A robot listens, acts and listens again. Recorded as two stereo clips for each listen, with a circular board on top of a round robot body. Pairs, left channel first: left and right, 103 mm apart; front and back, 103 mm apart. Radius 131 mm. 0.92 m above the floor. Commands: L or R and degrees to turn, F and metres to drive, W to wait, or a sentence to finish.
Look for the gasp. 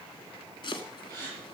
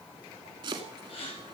R35
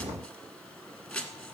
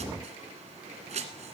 I heard a gasp from this way, but can't make it out now.